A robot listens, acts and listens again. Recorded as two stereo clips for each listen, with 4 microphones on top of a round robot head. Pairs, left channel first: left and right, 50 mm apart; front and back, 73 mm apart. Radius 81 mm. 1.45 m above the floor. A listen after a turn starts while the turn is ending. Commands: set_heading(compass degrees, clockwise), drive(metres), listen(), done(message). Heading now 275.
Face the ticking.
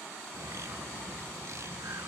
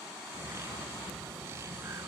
listen()
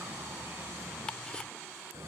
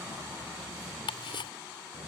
set_heading(265)
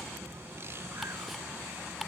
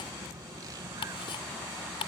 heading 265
done("Found it: ticking, straight ahead.")